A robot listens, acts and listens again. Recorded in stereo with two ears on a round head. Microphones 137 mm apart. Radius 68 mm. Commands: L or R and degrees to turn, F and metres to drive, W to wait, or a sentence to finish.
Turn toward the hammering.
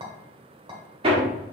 R35
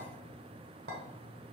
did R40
W
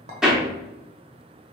Facing the hammering.